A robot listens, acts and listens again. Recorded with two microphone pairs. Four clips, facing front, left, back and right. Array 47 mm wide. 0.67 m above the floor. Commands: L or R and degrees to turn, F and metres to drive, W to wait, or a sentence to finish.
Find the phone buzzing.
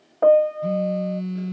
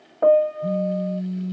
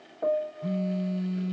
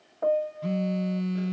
R75
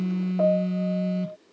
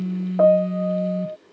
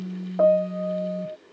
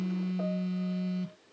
Found it: a phone buzzing, straight ahead.